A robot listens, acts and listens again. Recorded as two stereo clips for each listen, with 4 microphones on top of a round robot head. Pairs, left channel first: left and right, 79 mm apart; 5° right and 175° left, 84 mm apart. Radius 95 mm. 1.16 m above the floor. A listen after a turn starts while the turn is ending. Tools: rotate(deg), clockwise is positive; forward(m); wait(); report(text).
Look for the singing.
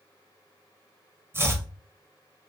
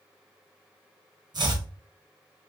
wait()
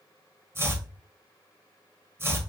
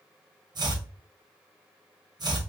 wait()
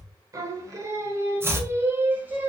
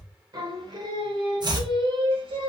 rotate(165)
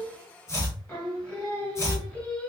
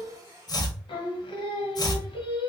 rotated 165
rotate(-15)
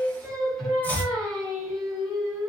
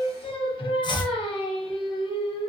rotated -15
report("Facing the singing, 1 to 2 m away.")